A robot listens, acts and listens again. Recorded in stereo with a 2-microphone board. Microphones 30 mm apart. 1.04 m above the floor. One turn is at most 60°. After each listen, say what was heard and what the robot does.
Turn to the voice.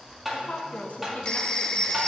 The woman speaking: about 60° left or 120° left. Turn 60° left.
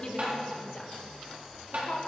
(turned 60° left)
So it is at 40° left. Turn 40° left.
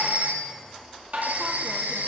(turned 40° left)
Keep listening.
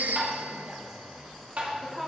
The woman speaking is now 10° right. Turn 10° right.
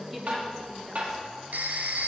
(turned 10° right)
Found it: a woman speaking, straight ahead.